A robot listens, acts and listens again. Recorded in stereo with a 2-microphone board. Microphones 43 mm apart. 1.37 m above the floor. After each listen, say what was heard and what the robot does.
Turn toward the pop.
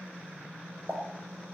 The pop: about 45° right or 135° right. Turn 45° right.
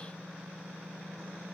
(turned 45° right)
Keep listening.
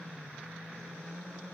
I heard a pop, but can't make it out now. It was about straight ahead or 90° right.